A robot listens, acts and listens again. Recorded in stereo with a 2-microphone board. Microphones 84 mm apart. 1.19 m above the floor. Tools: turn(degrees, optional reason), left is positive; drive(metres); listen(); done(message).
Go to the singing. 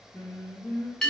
turn(degrees=45, reason="The singing: about 45° left or 135° left.")
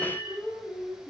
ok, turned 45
turn(degrees=90, reason="So it is at 90° left.")
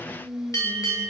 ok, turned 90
drive(metres=1.0)
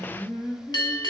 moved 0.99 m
turn(degrees=10, reason="The singing is now 10° left.")
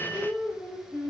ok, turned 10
drive(metres=1.0)
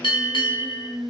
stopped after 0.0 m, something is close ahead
done("I am next to the singing.")